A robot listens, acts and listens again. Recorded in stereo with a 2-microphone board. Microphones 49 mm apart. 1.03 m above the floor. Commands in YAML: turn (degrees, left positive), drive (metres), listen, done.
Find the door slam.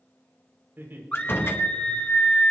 turn: 55
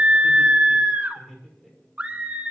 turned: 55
listen: true
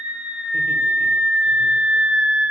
done: "I heard a door slam, but can't make it out now. It was about straight ahead or 70° left."